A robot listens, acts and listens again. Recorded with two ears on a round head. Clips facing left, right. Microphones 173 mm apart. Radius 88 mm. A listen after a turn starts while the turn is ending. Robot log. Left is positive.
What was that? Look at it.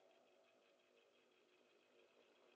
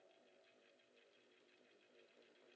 cmd idle
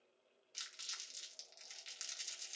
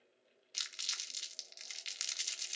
note: The crumpling: about 75° right or 105° right.
cmd yaw -75
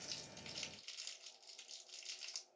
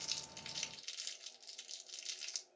note: So it is at 15° right.
cmd yaw -15
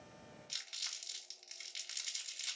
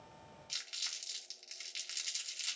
end: Facing the crumpling.